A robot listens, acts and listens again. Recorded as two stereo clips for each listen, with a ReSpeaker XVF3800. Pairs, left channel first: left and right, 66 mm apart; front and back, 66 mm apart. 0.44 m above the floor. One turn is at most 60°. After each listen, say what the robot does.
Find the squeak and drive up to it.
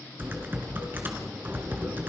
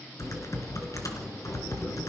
Keep listening.
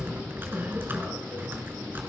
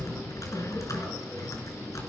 Keep listening.
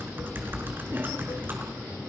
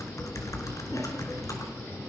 I can't make out a squeak to turn to.